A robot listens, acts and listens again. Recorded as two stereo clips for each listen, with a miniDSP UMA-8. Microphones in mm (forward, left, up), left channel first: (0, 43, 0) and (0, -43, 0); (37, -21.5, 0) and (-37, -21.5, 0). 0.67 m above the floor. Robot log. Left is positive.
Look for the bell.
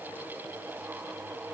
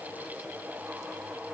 cmd idle
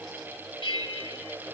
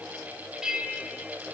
note: The bell: 100° left.
cmd yaw +100
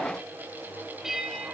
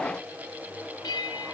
end: Found it: a bell, straight ahead.